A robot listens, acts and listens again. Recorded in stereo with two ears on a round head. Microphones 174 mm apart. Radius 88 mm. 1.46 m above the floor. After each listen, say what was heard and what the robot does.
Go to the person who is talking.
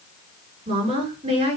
The woman speaking: about 35° right or 145° right. Turn 35° right.
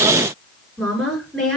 Drive 1.0 m forward.
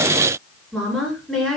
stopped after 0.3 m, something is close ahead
Blocked. The woman speaking is further on, straight ahead.